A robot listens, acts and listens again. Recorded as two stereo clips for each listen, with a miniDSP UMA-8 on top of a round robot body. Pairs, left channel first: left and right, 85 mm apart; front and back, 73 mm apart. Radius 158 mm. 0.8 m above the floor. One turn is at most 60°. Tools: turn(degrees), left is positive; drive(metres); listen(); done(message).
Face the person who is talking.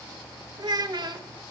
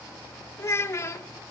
turn(degrees=-55)
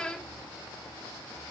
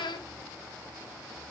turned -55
turn(degrees=10)
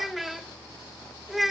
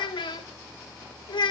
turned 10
done("Found it: a child speaking, straight ahead.")